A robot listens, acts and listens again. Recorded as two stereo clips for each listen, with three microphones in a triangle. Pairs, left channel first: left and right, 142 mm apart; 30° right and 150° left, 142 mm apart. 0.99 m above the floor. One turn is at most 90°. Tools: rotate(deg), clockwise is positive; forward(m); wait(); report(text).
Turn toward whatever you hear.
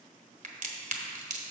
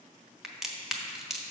rotate(90)
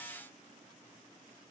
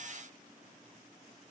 rotate(35)
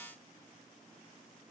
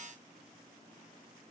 report("I heard a crack from this way, but can't make it out now.")